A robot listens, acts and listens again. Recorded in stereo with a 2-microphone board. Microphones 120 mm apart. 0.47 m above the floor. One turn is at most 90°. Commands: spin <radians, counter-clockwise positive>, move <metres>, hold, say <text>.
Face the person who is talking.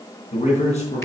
spin 1.57
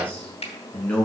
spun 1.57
spin 0.17
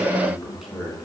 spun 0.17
say Facing the man speaking.